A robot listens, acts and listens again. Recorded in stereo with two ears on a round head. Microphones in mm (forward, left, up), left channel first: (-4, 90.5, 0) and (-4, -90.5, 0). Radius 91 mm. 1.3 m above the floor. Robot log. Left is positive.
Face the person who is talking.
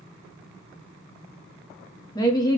note: The woman speaking: about 20° left or 160° left.
cmd yaw +20
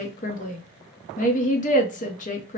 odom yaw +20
note: So it is at 135° left.
cmd yaw +135
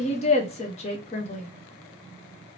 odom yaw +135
note: The woman speaking is now 35° left.
cmd yaw +35
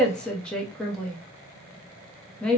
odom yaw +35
end: Found it: a woman speaking, straight ahead, under 1 m away.